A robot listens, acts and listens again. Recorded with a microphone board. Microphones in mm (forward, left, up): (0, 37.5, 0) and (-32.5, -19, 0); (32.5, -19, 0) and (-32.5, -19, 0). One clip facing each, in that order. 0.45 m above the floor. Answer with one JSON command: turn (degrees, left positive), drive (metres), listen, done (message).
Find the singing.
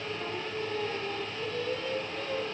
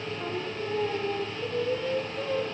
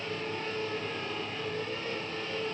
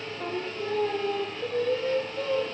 {"turn": 165}
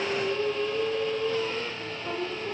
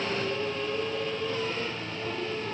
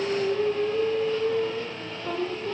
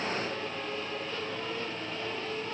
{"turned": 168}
{"done": "Found it: singing, straight ahead."}